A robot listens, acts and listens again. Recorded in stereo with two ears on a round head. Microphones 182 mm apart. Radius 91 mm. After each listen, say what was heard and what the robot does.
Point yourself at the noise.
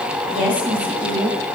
Turn 30° right.
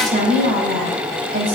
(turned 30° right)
So it is at 135° right. Turn 135° right.
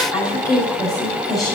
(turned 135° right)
The woman speaking is now 20° left. Turn 20° left.
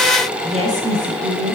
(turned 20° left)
Found it: a woman speaking, straight ahead, over 4 m away.